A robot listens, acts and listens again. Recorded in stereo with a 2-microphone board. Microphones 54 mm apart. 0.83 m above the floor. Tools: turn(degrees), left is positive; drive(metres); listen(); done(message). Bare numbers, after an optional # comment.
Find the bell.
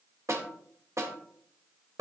listen()
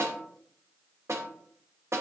listen()
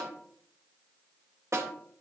done("I can't make out a bell to turn to.")